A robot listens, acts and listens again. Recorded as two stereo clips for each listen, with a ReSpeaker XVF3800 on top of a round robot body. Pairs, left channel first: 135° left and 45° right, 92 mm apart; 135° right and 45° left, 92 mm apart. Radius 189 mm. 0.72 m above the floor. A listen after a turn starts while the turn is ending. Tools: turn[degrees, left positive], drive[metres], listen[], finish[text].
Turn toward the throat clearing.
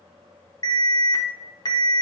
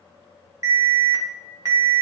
Action: listen[]
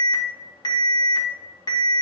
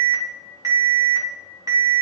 Action: listen[]
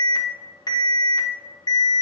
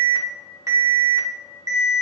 Action: finish[I can't make out throat clearing, only an alarm.]